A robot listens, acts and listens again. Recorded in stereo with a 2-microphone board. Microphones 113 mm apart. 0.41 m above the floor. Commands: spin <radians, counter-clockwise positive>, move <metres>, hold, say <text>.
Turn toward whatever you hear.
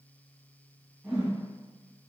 spin -0.52
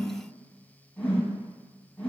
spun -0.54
spin 0.26
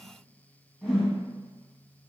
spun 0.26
say Found it: a whoosh, straight ahead.